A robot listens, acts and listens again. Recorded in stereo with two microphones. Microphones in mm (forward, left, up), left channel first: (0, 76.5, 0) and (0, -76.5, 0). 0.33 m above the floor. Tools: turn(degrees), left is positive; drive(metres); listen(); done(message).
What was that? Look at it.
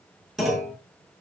turn(degrees=30)
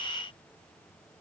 listen()
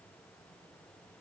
done("I heard a clunk, but can't make it out now. It was about 30° right or 150° left.")